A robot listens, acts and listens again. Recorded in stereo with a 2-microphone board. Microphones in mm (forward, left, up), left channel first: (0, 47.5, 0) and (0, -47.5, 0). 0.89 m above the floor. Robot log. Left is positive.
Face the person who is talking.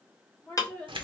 note: The woman speaking: about 15° left or 165° left.
cmd yaw +15
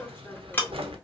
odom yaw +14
cmd idle
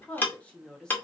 cmd yaw +30
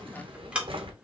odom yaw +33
cmd idle
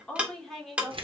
cmd yaw +30
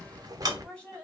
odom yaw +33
cmd yaw +30
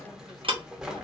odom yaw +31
cmd idle
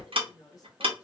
note: So it is at 145° left.
cmd yaw +145
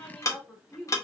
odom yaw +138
end: Found it: a woman speaking, straight ahead, 1 to 2 m away.